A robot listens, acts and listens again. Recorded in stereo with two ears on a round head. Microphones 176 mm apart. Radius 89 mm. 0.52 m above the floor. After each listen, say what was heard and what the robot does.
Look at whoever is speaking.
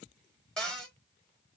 Keep listening.
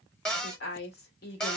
The woman speaking: about 55° left or 125° left. Turn 55° left.
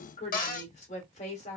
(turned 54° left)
So it is at 45° left. Turn 45° left.
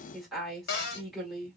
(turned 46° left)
Facing the woman speaking.